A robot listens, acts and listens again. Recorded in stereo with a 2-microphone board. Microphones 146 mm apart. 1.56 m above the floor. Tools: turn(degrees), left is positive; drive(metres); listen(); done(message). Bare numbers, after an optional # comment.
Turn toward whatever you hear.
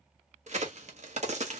# The crack: about 50° right or 130° right.
turn(-50)
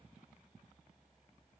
listen()
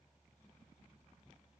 done("I heard a crack, but can't make it out now. It was about straight ahead or 80° right.")